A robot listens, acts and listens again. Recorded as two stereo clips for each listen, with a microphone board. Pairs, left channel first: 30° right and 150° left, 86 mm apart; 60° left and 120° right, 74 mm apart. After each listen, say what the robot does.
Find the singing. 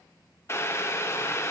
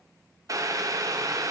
Keep listening.
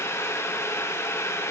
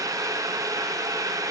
Keep listening.
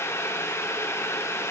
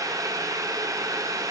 I can't make out singing, only boiling.